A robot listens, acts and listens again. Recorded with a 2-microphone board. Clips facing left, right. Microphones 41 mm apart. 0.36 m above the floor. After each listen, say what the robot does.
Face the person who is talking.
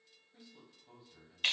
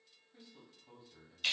Turn 30° right.
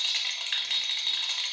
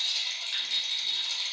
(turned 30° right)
Keep listening.
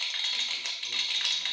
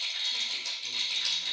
Keep listening.
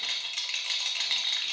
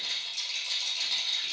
I heard a man speaking, but can't make it out now. It was about 25° left or 145° right.